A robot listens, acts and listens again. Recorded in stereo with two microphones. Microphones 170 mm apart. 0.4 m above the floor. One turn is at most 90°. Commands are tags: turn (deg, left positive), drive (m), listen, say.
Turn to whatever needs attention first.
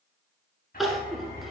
<turn deg="30"/>
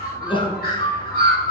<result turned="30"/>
<turn deg="90"/>
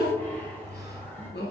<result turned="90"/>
<turn deg="85"/>
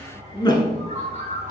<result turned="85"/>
<turn deg="25"/>
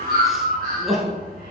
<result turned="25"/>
<say>Facing the crying, 1 to 2 m away.</say>